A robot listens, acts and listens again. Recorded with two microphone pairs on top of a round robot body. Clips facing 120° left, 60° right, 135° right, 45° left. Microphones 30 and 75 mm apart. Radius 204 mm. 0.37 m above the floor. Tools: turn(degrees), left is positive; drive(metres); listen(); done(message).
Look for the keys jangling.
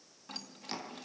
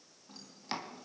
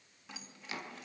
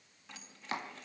turn(degrees=135)
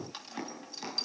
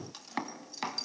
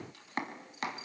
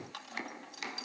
turn(degrees=55)
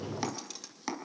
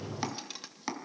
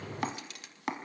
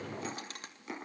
done("Facing the keys jangling.")